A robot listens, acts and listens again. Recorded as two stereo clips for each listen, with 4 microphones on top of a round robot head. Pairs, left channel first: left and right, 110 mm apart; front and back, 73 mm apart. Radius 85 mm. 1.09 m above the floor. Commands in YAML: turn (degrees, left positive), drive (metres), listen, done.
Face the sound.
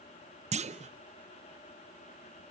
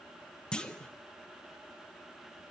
turn: -80
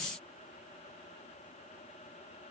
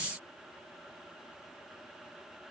done: "I heard a clunk from this way, but can't make it out now."